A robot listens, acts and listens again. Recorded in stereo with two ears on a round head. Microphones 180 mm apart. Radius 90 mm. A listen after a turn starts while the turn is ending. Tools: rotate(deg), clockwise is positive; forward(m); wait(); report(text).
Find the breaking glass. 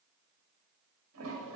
wait()
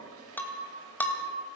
rotate(-30)
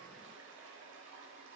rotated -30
wait()
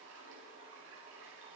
report("I heard breaking glass, but can't make it out now. It was about 20° right or 140° left.")